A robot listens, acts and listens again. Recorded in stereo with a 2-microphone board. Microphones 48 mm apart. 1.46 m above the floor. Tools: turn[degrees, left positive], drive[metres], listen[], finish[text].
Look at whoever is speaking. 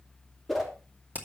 Action: listen[]
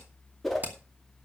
Action: listen[]
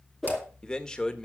Thought: The man speaking: about 15° left or 165° left.
Action: turn[15]
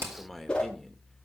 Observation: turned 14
Action: listen[]
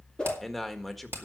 Action: finish[Facing the man speaking.]